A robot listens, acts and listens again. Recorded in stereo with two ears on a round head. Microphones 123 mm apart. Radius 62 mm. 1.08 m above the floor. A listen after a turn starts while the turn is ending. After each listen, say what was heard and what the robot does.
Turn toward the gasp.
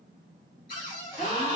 The gasp: about 40° left or 140° left. Turn 40° left.
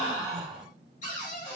Found it: a gasp, straight ahead, 1 to 2 m away.